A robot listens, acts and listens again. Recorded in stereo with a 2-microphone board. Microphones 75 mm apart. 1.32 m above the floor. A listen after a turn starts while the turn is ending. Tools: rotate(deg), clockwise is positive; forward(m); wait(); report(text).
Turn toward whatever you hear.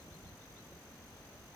wait()
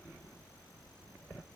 wait()
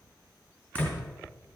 rotate(-20)
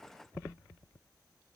wait()
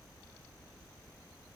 report("I heard a door slam, but can't make it out now. It was about straight ahead or 140° left.")